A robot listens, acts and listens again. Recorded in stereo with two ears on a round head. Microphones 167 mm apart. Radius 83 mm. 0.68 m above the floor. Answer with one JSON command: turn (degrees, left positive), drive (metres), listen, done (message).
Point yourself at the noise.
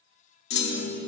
{"turn": 60}
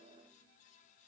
{"listen": true}
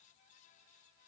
{"done": "I heard a clunk, but can't make it out now. It was about straight ahead or 60° left."}